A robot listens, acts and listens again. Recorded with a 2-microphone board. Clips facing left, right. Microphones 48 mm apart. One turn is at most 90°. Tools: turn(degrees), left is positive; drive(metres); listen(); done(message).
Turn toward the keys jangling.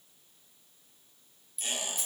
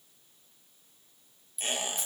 turn(degrees=30)
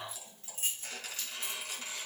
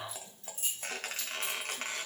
turn(degrees=90)
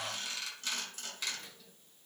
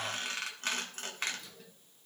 turn(degrees=40)
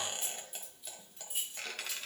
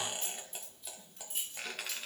turn(degrees=10)
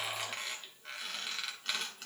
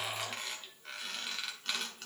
listen()
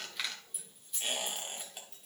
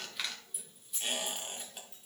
done("Found it: keys jangling, straight ahead, over 4 m away.")